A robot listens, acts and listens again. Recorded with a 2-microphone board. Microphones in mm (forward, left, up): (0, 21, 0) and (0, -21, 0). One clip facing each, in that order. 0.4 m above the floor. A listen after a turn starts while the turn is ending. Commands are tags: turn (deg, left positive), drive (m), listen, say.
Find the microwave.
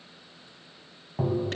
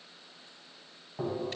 <listen/>
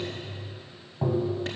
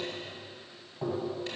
<listen/>
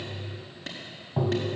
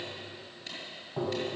<say>I can't make out a microwave to turn to.</say>